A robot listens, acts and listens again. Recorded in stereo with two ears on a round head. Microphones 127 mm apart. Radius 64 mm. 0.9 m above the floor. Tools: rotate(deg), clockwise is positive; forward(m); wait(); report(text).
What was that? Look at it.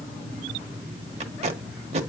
rotate(50)
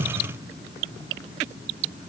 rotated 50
wait()
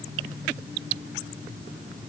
wait()
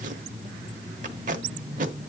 rotate(75)
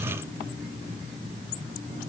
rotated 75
wait()
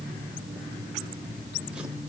wait()
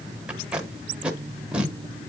rotate(10)
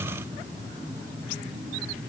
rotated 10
wait()
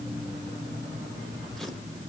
wait()
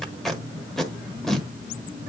report("Found it: tape being pulled, straight ahead.")